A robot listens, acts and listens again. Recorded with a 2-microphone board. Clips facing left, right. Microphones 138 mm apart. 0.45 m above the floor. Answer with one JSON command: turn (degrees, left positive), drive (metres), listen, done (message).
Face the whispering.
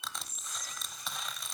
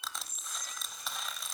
{"turn": -60}
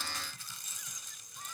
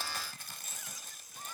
{"done": "Facing the whispering, 1 to 2 m away."}